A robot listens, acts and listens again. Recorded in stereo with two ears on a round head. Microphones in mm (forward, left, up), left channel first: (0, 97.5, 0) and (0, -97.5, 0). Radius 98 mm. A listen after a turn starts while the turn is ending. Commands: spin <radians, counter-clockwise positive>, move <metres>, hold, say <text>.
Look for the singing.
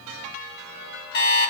hold
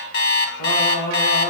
spin 1.22
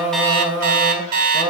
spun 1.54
spin -0.44
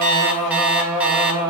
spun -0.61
spin -0.17
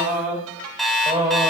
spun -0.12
spin -0.26
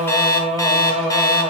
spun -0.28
say Facing the singing.